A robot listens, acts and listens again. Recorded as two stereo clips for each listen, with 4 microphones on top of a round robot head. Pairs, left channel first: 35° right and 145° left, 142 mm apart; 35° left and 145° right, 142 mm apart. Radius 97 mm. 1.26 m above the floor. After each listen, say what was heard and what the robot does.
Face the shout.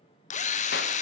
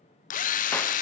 Keep listening.
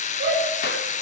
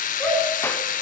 The shout: 115° left. Turn 115° left.
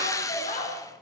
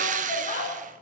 Found it: a shout, straight ahead.